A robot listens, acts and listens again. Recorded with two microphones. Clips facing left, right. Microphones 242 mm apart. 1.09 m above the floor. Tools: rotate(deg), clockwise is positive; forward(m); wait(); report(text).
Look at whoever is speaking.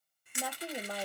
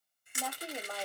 rotate(-30)
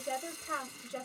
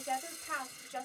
rotate(-135)
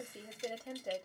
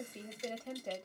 rotate(-10)
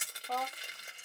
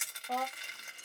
report("Facing the woman speaking.")